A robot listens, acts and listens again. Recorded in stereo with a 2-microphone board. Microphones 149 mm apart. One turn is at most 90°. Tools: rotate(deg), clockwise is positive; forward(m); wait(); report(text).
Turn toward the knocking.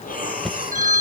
rotate(-30)
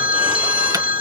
wait()
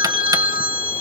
wait()
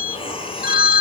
report("I heard knocking, but can't make it out now. It was about 30° right or 150° left.")